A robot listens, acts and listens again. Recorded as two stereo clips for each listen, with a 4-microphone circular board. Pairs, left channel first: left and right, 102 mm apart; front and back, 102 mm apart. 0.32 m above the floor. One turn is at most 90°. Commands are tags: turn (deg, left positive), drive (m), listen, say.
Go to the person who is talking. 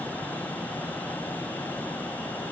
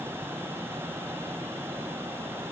<listen/>
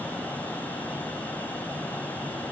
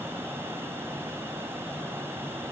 <listen/>
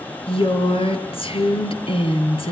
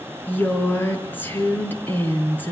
<turn deg="70"/>
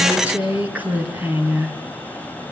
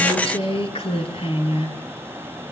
<turn deg="-15"/>
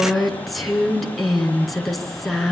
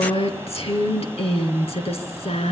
<drive m="1.0"/>
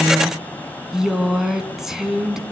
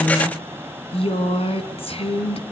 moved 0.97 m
<drive m="1.0"/>
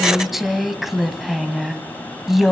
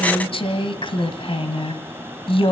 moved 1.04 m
<drive m="1.0"/>
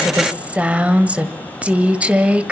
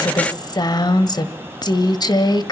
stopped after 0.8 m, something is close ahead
<turn deg="-20"/>
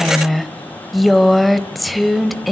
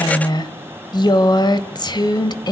<say>Arrived at the woman speaking, straight ahead.</say>